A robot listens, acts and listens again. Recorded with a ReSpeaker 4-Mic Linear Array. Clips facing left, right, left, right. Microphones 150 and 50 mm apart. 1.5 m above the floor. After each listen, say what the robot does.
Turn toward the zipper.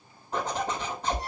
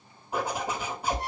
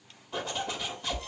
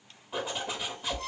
Turn 30° right.
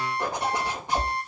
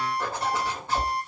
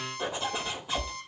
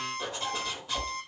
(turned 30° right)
Turn 20° left.
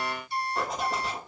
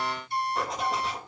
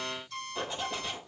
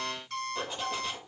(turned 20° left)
Facing the zipper, 2 to 4 m away.